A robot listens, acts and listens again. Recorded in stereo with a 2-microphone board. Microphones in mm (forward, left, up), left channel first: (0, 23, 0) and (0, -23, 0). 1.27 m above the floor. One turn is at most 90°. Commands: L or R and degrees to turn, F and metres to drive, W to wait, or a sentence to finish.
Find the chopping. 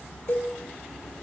W
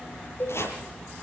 L75
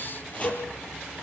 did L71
W
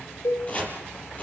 L30
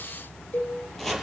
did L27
Facing the chopping.